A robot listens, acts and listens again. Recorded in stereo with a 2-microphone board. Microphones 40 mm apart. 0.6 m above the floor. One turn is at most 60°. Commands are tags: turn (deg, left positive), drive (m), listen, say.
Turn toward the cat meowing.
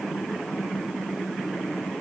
<listen/>
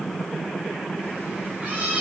<turn deg="-30"/>
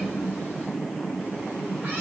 <listen/>
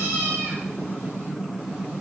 <turn deg="-60"/>
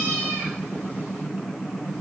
<turn deg="-60"/>
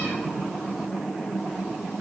<turn deg="-20"/>
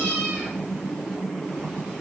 <say>Facing the cat meowing.</say>